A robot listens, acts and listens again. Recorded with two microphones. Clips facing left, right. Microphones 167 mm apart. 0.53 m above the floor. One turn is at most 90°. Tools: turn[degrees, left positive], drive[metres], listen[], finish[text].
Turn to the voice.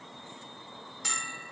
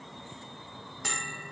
Action: listen[]
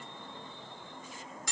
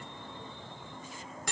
Action: listen[]
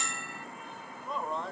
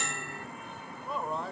Action: turn[30]
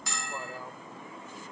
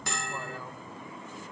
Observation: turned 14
Action: listen[]
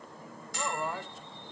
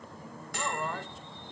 Thought: So it is at 170° left.
Action: turn[90]
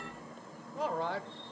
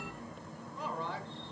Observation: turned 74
Thought: The man speaking is now 95° left.
Action: turn[90]
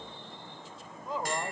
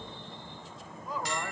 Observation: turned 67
Thought: The man speaking is now 25° left.
Action: turn[25]
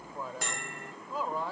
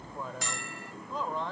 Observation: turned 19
Thought: The man speaking is now 10° left.
Action: turn[10]
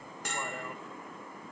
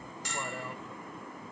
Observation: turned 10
Action: listen[]
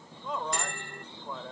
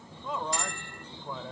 Action: finish[Facing the man speaking.]